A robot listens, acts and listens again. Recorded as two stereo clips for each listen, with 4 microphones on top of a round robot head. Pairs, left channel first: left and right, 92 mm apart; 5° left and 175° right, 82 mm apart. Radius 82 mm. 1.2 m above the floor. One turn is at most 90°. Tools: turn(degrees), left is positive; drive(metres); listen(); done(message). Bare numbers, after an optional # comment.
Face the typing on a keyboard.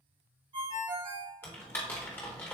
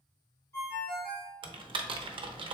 # The typing on a keyboard: 165° left.
turn(90)
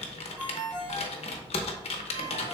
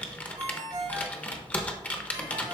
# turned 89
# The typing on a keyboard is now 75° left.
turn(75)
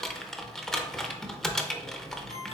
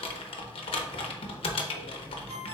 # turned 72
done("Found it: typing on a keyboard, straight ahead, under 1 m away.")